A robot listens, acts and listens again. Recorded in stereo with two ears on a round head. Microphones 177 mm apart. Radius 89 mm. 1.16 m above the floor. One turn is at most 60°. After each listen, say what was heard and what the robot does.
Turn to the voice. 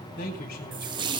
The man speaking: about 45° left or 135° left. Turn 45° left.
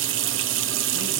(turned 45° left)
Keep listening.
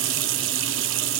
Keep listening.
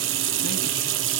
I heard a man speaking, but can't make it out now. It was about straight ahead or 90° left.